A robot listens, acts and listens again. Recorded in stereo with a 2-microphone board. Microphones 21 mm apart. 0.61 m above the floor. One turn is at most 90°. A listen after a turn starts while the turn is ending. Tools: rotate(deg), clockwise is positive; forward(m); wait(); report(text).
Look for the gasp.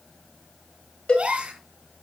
rotate(90)
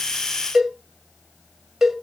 report("I heard a gasp from this way, but can't make it out now.")